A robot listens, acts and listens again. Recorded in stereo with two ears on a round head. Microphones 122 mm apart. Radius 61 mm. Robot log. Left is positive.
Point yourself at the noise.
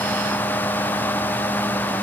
cmd idle
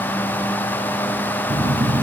note: The phone buzzing: about 20° right or 160° right.
cmd yaw -20
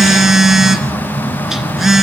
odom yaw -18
end: Facing the phone buzzing, 1 to 2 m away.